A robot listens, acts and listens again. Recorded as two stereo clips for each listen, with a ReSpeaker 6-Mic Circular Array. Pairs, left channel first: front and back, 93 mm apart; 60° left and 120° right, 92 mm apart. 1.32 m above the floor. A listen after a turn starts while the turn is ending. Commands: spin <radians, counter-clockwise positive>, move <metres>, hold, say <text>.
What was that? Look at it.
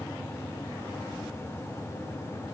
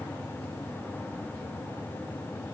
hold
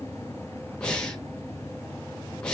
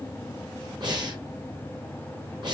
spin -1.40
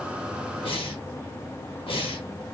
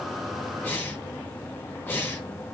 spin -0.17
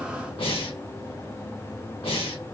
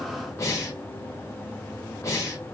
say Facing the breathing, 1 to 2 m away.